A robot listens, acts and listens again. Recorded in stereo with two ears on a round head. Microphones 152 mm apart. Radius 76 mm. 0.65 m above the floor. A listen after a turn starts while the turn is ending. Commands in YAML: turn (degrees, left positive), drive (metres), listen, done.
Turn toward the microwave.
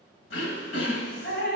listen: true
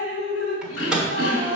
turn: -30
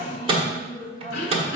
turn: -145
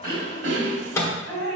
turn: 20
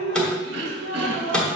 done: "Found it: a microwave, straight ahead, 1 to 2 m away."